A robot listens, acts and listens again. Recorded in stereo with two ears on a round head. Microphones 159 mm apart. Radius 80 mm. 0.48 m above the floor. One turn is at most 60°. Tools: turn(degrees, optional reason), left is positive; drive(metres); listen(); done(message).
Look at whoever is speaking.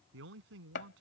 turn(degrees=-60)
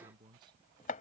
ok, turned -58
turn(degrees=-25, reason="So it is at 25° right.")
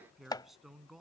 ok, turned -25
done("Facing the man speaking.")